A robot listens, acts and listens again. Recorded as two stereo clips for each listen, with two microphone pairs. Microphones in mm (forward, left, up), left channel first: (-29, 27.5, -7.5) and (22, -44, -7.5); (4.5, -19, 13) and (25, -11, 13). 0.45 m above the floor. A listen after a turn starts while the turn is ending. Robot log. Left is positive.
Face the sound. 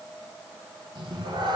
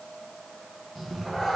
note: The cat meowing: 80° right.
cmd yaw -80
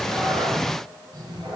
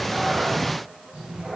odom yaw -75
note: The cat meowing is now 20° right.
cmd yaw -20
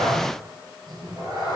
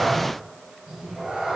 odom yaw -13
note: The cat meowing is now 15° right.
cmd yaw -15
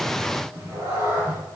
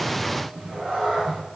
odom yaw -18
end: Facing the cat meowing.